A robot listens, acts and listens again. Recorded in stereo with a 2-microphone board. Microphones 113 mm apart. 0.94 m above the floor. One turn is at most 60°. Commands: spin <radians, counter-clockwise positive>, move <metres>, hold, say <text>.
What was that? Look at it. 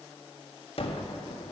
spin 0.96
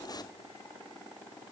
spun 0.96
hold
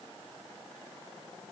say I heard a gunshot, but can't make it out now. It was about straight ahead or 70° left.